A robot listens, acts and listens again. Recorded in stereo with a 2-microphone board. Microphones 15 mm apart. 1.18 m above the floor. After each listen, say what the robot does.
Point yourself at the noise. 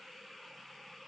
Keep listening.
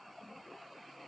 Keep listening.
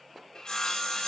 Turn 55° left.
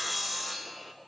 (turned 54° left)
Found it: sawing, straight ahead.